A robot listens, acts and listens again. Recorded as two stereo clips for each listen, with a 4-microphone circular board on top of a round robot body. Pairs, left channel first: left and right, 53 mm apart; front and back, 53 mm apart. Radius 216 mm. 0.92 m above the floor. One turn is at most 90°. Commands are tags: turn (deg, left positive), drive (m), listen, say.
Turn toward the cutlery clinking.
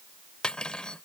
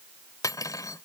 <turn deg="15"/>
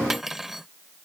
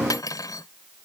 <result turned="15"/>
<say>Found it: cutlery clinking, straight ahead.</say>